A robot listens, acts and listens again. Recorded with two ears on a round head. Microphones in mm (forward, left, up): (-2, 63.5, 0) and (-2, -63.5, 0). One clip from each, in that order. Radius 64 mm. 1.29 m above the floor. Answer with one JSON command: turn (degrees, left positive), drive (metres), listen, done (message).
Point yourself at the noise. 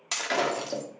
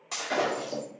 {"turn": 65}
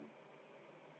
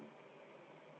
{"listen": true}
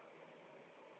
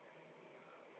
{"done": "I heard breaking glass, but can't make it out now. It was about straight ahead or 50° left."}